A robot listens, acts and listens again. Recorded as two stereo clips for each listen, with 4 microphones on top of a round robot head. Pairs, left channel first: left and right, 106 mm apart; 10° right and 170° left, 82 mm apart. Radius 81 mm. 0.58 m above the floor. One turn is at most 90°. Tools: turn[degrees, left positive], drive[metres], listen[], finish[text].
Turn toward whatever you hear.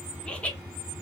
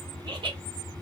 Thought: The laughter: 165° left.
Action: turn[90]
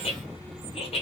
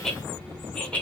Thought: The laughter is now 65° left.
Action: turn[65]
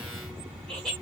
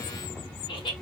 Action: finish[Found it: laughter, straight ahead.]